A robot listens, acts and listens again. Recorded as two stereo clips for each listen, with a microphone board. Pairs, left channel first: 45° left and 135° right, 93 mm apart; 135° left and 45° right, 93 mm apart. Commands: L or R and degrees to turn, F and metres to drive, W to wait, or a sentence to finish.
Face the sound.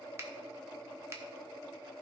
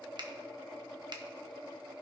R75
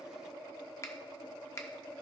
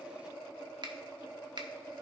R10
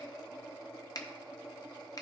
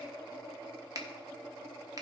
Facing the finger snap, 1 to 2 m away.